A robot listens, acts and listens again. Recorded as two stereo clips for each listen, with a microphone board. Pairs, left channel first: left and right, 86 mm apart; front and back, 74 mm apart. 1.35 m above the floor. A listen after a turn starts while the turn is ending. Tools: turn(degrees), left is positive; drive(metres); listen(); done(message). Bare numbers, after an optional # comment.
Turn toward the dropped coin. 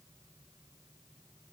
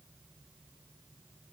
listen()
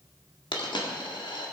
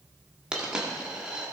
# The dropped coin: 105° left.
turn(105)
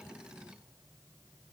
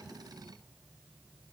done("Facing where the dropped coin came from. I can't hear it now.")